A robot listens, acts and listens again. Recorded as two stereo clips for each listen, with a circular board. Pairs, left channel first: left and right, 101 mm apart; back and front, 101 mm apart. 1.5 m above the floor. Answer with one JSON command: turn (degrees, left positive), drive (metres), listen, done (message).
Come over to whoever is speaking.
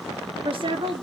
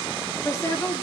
{"turn": -120}
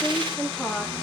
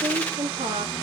{"drive": 1.0}
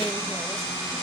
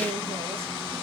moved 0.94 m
{"listen": true}
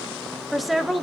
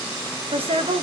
{"drive": 1.0}
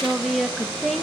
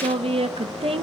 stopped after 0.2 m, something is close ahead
{"done": "Arrived at the woman speaking, straight ahead."}